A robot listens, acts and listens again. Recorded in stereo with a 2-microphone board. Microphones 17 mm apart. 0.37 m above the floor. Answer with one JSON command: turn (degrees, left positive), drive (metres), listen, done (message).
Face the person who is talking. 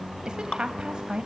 {"turn": -55}
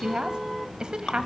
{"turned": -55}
{"turn": -55}
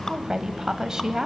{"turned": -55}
{"turn": -35}
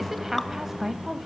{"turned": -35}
{"turn": -20}
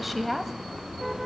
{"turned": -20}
{"done": "Facing the woman speaking, 1 to 2 m away."}